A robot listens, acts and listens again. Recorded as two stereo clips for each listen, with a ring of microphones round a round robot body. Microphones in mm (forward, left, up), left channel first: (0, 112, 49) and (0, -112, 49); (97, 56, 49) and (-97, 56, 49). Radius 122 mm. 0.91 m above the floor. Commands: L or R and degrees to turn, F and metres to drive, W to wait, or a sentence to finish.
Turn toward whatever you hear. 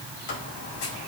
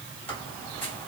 L80
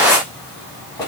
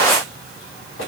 L15
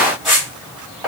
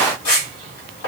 Facing the squeak, 2 to 4 m away.